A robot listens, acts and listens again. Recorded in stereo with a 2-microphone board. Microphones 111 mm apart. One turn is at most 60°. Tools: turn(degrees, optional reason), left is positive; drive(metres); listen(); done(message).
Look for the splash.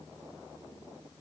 listen()
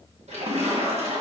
turn(degrees=-60, reason="The splash: about 65° right or 115° right.")
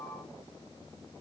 listen()
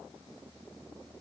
done("I heard a splash, but can't make it out now. It was about 5° right or 55° right.")